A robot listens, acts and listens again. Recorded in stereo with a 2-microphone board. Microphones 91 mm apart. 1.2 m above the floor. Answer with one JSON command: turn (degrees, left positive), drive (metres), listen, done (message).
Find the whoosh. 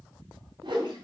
{"turn": -55}
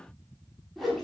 {"done": "Found it: a whoosh, straight ahead."}